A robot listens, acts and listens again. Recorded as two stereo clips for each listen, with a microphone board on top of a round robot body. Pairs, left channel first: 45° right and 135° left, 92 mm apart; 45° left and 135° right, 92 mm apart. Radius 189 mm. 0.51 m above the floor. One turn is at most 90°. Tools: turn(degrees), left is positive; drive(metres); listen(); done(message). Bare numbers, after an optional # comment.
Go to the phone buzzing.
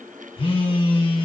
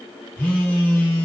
# The phone buzzing: 35° right.
turn(-35)
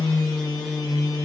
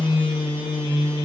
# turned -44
# The phone buzzing is now 10° left.
turn(10)
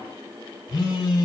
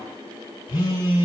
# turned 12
drive(1.0)
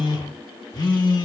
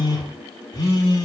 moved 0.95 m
drive(1.0)
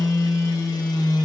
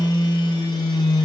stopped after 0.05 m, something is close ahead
done("Arrived at the phone buzzing, straight ahead.")